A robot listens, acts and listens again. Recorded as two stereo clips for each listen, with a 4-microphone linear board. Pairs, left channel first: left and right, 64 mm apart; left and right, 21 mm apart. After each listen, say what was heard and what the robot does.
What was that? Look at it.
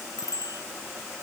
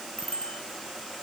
The bicycle bell: about 70° left or 110° left. Turn 70° left.
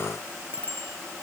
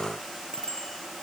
So it is at 35° left. Turn 35° left.
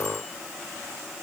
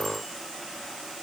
Keep listening.
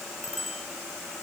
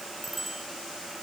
Facing the bicycle bell.